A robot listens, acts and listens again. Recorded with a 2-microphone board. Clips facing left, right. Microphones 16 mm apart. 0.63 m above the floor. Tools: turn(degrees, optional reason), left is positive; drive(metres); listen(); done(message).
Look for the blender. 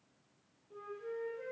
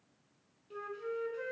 listen()
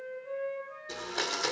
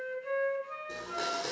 turn(degrees=55, reason="The blender: about 55° left or 125° left.")
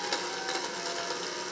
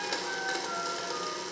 turn(degrees=15, reason="So it is at 15° left.")
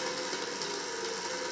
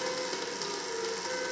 done("Facing the blender.")